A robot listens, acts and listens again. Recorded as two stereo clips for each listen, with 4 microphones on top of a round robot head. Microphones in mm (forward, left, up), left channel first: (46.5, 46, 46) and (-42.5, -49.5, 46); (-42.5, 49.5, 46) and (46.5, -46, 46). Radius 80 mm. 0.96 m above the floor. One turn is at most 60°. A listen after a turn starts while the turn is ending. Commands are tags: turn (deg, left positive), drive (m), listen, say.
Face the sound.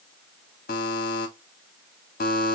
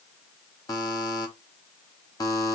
<turn deg="60"/>
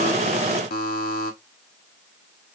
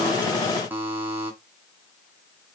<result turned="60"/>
<turn deg="30"/>
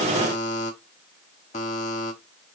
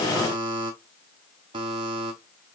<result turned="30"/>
<turn deg="10"/>
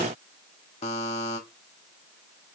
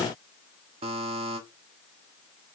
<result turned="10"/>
<say>Found it: a buzzer, straight ahead.</say>